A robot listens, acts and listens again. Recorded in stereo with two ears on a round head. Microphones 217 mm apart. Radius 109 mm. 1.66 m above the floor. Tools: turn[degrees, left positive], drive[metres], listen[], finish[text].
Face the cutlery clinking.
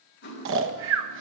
Thought: The cutlery clinking: about 45° left or 135° left.
Action: turn[45]
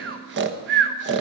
Action: listen[]
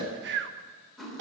Action: finish[Facing the cutlery clinking.]